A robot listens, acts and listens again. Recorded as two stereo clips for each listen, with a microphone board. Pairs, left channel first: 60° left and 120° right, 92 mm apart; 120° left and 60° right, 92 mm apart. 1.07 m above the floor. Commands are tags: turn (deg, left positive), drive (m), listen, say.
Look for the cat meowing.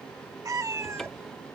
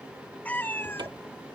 <turn deg="-175"/>
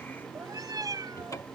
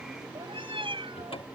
<turn deg="-75"/>
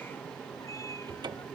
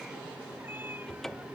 <listen/>
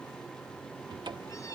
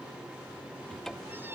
<listen/>
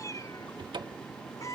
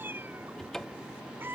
<say>Facing the cat meowing.</say>